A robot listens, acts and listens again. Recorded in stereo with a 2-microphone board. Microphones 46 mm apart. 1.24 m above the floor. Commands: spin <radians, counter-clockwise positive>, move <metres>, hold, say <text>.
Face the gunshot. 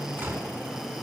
spin -1.05
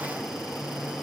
hold
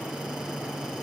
say I heard a gunshot, but can't make it out now. It was about straight ahead or 60° right.